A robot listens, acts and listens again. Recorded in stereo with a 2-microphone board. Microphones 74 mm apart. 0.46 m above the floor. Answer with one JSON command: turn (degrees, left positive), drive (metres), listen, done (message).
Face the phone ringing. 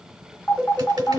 {"turn": 25}
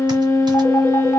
{"listen": true}
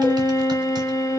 {"listen": true}
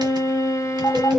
{"turn": 130}
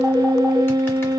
{"listen": true}
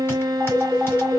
{"turn": 15}
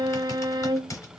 {"listen": true}
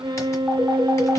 {"listen": true}
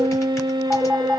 {"done": "Found it: a phone ringing, straight ahead, 2 to 4 m away."}